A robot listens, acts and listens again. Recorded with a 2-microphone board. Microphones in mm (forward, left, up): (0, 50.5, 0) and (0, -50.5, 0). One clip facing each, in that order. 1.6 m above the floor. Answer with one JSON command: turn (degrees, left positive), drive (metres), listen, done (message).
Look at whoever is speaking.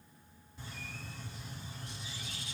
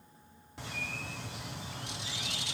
{"listen": true}
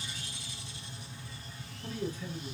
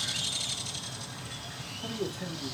{"turn": -90}
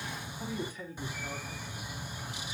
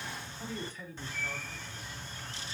{"turn": 15}
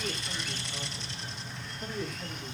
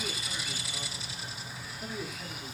{"done": "Facing the man speaking."}